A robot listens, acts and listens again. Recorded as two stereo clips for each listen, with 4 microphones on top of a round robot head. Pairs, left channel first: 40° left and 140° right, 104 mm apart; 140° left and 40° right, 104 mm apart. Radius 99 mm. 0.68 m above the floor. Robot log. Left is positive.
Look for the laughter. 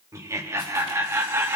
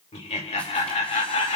note: The laughter: 150° left.
cmd yaw +150
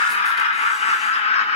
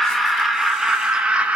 note: The laughter is now 40° left.
cmd yaw +40
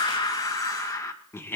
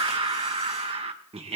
note: The laughter is now 30° right.
cmd yaw -30
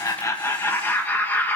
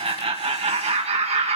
note: The laughter is now 35° right.
cmd yaw -35
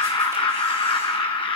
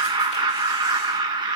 end: Facing the laughter, 1 to 2 m away.